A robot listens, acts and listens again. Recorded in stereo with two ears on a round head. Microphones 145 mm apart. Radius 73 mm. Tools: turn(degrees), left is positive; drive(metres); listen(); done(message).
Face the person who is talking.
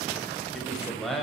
turn(degrees=30)
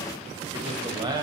turn(degrees=-30)
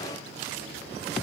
listen()
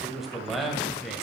done("Facing the man speaking.")